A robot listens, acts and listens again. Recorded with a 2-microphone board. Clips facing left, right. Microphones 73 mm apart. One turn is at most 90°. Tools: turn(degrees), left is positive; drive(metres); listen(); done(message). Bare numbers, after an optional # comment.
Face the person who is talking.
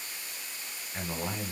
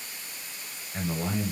turn(-30)
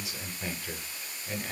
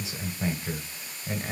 # So it is at 145° right.
turn(-90)
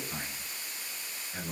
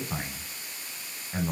# The man speaking is now 50° right.
turn(-50)
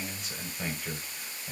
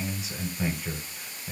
done("Found it: a man speaking, straight ahead, 1 to 2 m away.")